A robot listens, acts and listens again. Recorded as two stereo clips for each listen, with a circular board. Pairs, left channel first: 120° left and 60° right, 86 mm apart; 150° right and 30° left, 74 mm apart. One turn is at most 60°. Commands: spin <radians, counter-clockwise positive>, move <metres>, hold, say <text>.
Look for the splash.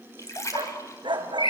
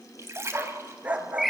spin 1.05
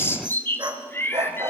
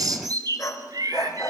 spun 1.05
spin 0.26
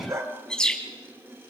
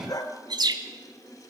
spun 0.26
say Facing where the splash came from. I can't hear it now.